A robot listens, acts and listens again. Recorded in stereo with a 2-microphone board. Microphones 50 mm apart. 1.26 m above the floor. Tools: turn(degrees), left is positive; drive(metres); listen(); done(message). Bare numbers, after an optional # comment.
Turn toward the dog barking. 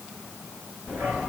# The dog barking: about 45° right or 135° right.
turn(-45)
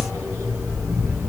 # So it is at 100° right.
turn(-100)
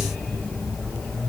# The dog barking is now 20° left.
turn(20)
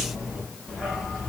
done("Facing the dog barking, over 4 m away.")